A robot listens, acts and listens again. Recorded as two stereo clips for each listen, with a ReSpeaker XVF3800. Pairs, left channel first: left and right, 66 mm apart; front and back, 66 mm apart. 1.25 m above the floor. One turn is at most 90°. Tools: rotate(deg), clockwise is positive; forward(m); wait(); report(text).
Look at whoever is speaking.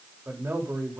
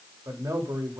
rotate(90)
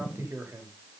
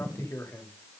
rotate(45)
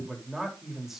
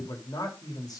report("Facing the man speaking.")